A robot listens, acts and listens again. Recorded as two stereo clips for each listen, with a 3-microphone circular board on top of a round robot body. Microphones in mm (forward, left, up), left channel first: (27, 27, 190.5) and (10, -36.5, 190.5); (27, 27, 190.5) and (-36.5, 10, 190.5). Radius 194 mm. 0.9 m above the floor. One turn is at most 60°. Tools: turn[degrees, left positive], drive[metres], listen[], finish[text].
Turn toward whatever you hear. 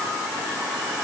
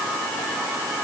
Action: listen[]
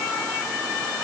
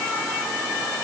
Action: listen[]
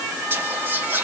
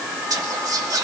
Thought: The whispering: 160° right.
Action: turn[-60]
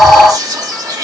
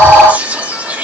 Thought: The whispering is now 100° right.
Action: turn[-60]
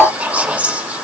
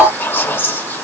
Thought: The whispering is now 40° right.
Action: turn[-40]
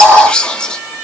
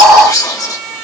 Action: finish[Found it: whispering, straight ahead, 2 to 4 m away.]